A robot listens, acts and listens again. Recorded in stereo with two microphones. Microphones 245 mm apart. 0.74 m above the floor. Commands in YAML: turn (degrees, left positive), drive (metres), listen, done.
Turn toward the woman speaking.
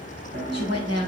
turn: -90
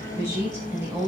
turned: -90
turn: -10
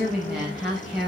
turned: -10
done: "Facing the woman speaking."